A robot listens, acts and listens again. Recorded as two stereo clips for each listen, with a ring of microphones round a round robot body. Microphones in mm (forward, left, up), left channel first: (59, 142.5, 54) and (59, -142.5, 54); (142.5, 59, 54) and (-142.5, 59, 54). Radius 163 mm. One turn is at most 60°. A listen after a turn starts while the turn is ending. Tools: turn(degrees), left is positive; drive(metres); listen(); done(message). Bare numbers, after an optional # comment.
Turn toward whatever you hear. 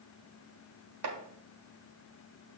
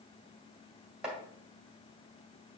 # The chopping: 95° right.
turn(-60)
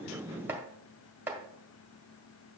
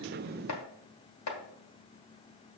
done("Found it: chopping, straight ahead.")